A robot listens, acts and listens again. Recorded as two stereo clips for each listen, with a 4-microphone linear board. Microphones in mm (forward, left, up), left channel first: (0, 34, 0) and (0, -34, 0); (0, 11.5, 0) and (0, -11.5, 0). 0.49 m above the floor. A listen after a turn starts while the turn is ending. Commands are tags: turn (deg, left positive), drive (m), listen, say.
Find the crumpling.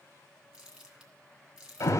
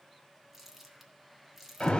<turn deg="-30"/>
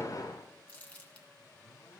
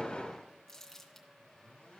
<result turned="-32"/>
<turn deg="20"/>
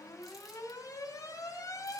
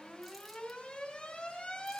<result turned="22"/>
<listen/>
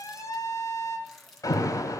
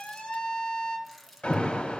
<say>Facing the crumpling, 2 to 4 m away.</say>